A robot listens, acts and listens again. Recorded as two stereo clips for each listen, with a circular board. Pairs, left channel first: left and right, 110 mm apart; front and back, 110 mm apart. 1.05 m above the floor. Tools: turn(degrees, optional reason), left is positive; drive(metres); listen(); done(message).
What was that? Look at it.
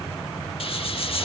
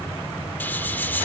turn(degrees=70, reason="The hiss: 70° left.")
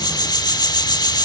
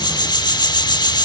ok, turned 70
turn(degrees=45, reason="The hiss is now 45° left.")
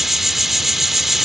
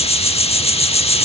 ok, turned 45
done("Found it: a hiss, straight ahead, 1 to 2 m away.")